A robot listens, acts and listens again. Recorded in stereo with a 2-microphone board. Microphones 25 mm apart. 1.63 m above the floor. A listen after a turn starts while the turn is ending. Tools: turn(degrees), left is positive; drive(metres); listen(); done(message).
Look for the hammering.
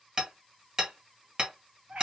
turn(degrees=-35)
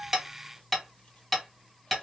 done("Facing the hammering, 1 to 2 m away.")